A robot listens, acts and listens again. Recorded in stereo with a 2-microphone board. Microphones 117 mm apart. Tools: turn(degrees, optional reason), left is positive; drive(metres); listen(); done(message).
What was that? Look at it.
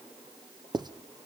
turn(degrees=-35, reason="The writing: about 35° right or 145° right.")
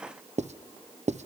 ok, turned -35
turn(degrees=-110, reason="So it is at 110° right.")
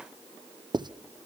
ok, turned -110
turn(degrees=-40, reason="The writing is now 40° right.")
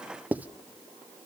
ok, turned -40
turn(degrees=-15, reason="The writing is now 15° right.")
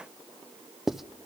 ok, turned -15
done("Found it: writing, straight ahead.")